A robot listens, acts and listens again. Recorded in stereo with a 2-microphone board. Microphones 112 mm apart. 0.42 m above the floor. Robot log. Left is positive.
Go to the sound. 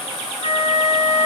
note: The flute: about 55° left or 125° left.
cmd yaw +55
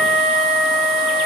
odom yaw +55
cmd fwd 1.0
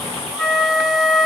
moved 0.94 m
cmd fwd 1.0
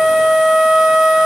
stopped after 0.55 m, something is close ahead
end: Arrived at the flute, straight ahead.